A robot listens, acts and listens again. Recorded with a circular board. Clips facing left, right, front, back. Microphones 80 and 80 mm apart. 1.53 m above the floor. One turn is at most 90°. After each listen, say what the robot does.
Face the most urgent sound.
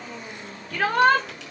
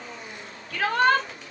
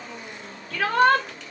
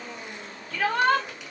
Turn 45° left.
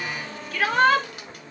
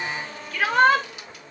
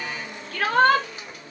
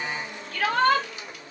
Facing the shout, 2 to 4 m away.